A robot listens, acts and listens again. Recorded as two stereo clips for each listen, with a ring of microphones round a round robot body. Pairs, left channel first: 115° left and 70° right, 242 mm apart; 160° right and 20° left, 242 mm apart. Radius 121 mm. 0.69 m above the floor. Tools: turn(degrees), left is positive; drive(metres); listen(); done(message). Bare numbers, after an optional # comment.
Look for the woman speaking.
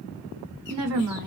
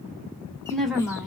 # The woman speaking: 65° right.
turn(-65)
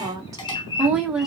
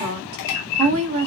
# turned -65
# The woman speaking is now 20° left.
turn(20)
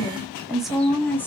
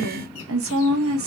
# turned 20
# The woman speaking is now 35° left.
turn(35)
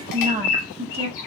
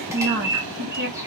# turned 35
done("Facing the woman speaking.")